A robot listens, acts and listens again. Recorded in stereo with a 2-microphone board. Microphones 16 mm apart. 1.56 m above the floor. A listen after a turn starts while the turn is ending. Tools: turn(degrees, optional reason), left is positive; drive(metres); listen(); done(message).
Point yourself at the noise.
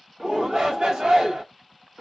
turn(degrees=-90)
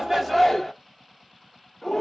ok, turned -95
turn(degrees=15, reason="So it is at 15° left.")
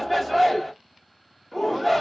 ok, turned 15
done("Facing the shout, 1 to 2 m away.")